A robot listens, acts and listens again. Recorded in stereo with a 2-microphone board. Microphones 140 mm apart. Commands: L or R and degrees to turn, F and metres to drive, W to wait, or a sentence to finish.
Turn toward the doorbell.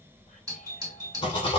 R30
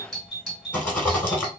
Found it: a doorbell, straight ahead, 2 to 4 m away.